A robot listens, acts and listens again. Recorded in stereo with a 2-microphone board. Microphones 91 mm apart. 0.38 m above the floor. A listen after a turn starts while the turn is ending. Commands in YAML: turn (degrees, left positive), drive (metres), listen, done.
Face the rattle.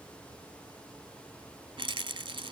turn: -70
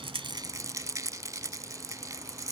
turn: -40
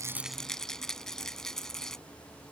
done: "Found it: a rattle, straight ahead."